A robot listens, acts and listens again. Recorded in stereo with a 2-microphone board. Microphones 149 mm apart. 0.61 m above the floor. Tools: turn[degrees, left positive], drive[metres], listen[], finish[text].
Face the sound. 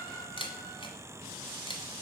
Thought: The camera shutter: about 35° left or 145° left.
Action: turn[35]
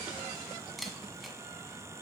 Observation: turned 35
Action: finish[Found it: a camera shutter, straight ahead, 1 to 2 m away.]